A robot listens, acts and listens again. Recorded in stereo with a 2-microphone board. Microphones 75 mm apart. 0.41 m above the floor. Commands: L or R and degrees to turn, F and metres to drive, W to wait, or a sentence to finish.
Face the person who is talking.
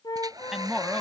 R30
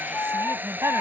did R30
R140
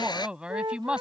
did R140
R15
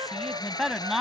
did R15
Facing the woman speaking.